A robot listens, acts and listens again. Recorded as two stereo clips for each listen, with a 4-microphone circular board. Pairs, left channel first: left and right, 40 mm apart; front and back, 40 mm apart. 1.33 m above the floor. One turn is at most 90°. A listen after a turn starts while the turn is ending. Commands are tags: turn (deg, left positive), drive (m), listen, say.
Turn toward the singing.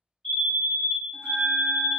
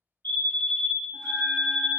<listen/>
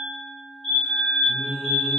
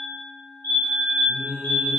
<turn deg="15"/>
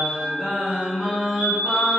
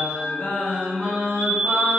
<turn deg="-20"/>
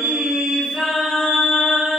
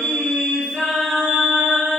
<turn deg="-10"/>
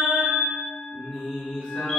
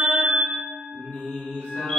<say>Found it: singing, straight ahead.</say>